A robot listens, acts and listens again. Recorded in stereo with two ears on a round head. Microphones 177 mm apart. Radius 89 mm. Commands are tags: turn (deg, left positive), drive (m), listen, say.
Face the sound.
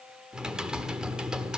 <turn deg="-30"/>
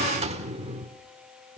<turn deg="-145"/>
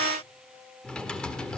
<say>Found it: typing on a keyboard, straight ahead, 1 to 2 m away.</say>